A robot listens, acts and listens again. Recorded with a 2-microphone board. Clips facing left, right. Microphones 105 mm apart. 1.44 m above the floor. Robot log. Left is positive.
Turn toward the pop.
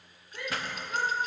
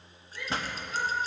note: The pop: about 25° right or 155° right.
cmd yaw -25
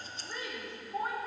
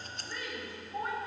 cmd idle
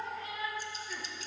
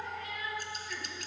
end: I heard a pop, but can't make it out now. It was about straight ahead or 130° right.